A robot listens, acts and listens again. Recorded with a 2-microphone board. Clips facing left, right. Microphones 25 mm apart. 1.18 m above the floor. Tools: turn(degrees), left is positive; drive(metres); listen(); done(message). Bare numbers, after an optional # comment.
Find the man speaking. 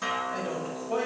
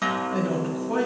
# The man speaking: about 65° right or 115° right.
turn(-65)
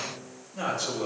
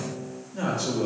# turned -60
# So it is at 15° right.
turn(-15)
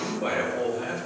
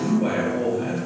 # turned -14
# The man speaking is now 10° right.
turn(-10)
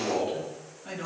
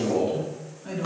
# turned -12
done("Facing the man speaking.")